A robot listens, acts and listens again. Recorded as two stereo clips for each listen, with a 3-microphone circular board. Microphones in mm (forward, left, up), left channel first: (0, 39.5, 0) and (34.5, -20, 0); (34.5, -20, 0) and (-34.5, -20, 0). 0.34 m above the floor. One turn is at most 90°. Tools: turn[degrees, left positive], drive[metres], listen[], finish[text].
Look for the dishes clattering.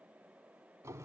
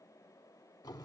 Action: listen[]
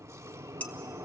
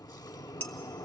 Thought: The dishes clattering: 55° left.
Action: turn[55]
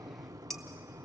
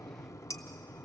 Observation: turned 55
Action: listen[]
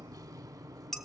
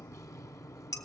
Thought: The dishes clattering is now 35° left.
Action: turn[35]
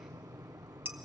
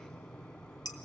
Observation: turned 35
Action: finish[Facing the dishes clattering.]